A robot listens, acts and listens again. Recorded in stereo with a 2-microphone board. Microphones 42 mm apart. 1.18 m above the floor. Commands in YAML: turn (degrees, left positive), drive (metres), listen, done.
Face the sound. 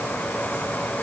listen: true
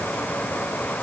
listen: true
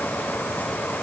done: "I can't make out anything."